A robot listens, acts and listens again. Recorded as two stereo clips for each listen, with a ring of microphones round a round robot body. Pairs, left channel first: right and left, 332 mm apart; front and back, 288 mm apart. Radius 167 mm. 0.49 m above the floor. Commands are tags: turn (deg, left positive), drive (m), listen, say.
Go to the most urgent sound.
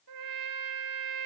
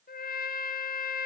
<listen/>
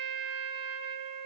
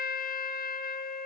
<listen/>
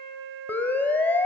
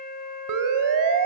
<turn deg="-175"/>
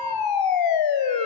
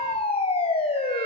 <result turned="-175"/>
<turn deg="-70"/>
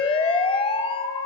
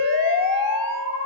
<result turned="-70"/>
<turn deg="-15"/>
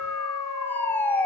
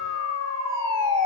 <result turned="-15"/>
<drive m="1.0"/>
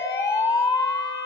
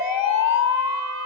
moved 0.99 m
<turn deg="-10"/>
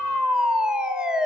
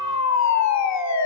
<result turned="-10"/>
<drive m="1.0"/>
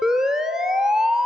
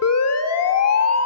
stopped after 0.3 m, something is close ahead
<say>I am next to the siren.</say>